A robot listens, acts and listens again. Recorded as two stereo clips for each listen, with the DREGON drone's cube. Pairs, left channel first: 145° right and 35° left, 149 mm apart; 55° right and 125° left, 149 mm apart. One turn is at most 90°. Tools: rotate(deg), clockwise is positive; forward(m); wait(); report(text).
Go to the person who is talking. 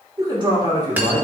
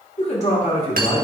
rotate(20)
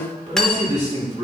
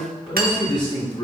forward(1.0)
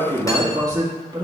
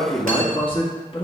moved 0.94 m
rotate(20)
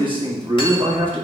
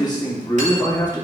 forward(1.0)
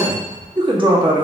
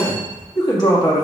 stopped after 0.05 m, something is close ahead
rotate(10)
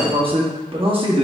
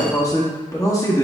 report("I am next to the man speaking.")